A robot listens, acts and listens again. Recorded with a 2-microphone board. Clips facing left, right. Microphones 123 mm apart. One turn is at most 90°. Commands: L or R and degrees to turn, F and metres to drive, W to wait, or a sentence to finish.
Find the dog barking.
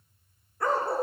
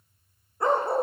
R20
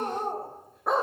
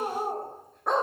Found it: a dog barking, straight ahead.